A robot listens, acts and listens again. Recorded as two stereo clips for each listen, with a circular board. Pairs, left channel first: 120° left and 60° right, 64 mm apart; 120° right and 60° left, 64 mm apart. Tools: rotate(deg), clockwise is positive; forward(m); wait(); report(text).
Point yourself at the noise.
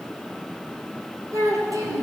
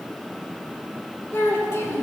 rotate(70)
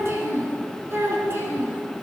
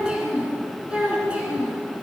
rotate(10)
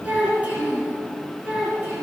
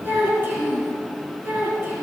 rotate(-10)
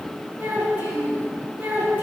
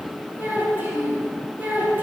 report("Facing the child speaking, over 4 m away.")